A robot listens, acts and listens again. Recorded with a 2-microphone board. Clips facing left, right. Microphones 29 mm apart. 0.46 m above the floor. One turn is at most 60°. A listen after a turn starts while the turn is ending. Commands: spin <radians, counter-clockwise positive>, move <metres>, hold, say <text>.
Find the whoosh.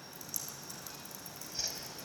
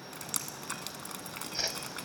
spin -0.61
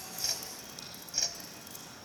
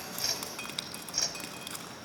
say Found it: a whoosh, straight ahead, 1 to 2 m away.